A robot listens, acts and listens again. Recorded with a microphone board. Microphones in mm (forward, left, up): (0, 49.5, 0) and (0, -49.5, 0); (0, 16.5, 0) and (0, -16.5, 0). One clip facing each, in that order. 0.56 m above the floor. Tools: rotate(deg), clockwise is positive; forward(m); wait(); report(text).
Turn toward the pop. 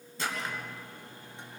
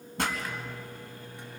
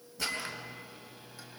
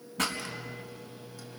rotate(60)
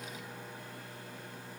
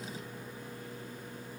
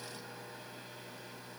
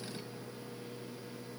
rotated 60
wait()
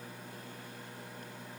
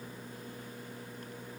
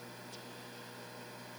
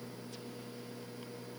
report("I heard a pop, but can't make it out now. It was about straight ahead or 60° right.")